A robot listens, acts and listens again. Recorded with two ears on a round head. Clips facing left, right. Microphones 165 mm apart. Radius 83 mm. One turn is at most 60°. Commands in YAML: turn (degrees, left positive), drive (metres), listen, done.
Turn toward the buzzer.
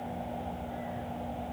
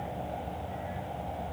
listen: true
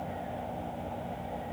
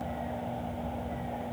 listen: true
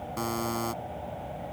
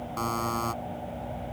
turn: 30
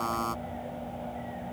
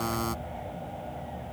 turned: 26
turn: -15
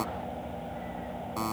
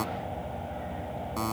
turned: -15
done: "Facing the buzzer."